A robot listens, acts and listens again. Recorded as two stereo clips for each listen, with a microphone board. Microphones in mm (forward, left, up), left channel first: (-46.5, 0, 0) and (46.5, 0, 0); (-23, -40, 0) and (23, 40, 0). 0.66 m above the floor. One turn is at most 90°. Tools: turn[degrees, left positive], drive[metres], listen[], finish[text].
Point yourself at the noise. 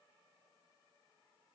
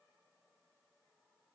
Action: listen[]
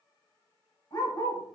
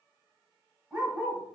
Thought: The dog barking: 135° left.
Action: turn[90]
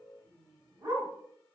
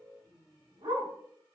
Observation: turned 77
Thought: The dog barking is now 55° left.
Action: turn[55]
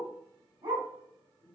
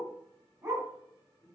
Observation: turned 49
Action: finish[Facing the dog barking.]